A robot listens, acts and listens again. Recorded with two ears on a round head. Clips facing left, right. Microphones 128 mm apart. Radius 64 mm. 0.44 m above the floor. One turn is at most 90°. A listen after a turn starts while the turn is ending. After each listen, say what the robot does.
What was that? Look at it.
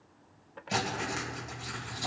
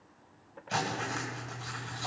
Turn 15° left.
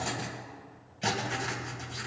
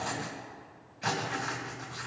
Turn 90° left.
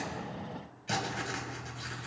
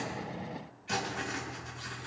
Turn 55° left.
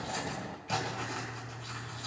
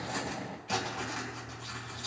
Found it: writing, straight ahead.